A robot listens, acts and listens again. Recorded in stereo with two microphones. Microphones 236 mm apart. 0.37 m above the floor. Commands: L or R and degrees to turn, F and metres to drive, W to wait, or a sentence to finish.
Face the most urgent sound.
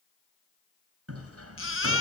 L65
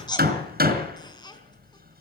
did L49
L20
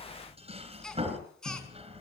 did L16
W
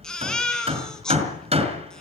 Found it: a baby crying, straight ahead.